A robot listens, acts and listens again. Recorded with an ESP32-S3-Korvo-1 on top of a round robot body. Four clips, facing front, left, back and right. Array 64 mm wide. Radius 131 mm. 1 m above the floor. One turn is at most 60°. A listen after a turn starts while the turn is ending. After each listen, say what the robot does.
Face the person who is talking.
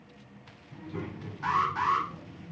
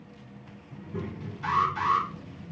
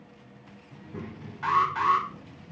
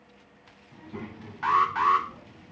Turn 60° right.
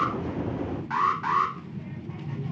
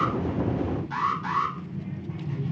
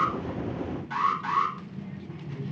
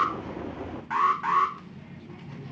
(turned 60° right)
Turn 10° right.
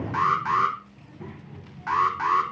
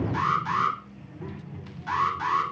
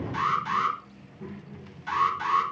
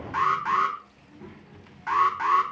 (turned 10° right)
Facing the child speaking.